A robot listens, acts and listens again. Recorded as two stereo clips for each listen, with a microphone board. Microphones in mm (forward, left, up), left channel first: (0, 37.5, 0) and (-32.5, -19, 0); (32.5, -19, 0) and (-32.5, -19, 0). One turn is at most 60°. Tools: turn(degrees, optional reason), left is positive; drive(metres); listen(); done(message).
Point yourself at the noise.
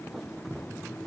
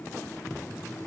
listen()
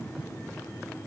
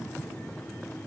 listen()
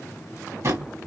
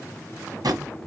turn(degrees=-60, reason="The drawer: 165° right.")
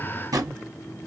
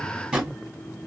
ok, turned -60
turn(degrees=-60, reason="The drawer is now 105° right.")
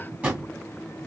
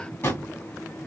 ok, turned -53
turn(degrees=-55, reason="The drawer is now 55° right.")
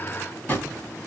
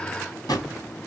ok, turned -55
done("Found it: a drawer, straight ahead.")